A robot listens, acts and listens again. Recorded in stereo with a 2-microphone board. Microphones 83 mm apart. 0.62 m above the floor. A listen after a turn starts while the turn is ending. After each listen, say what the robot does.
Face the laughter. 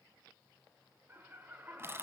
Turn 20° right.
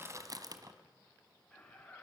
Turn 15° left.
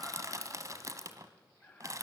Turn 15° left.
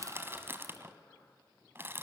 Facing the laughter.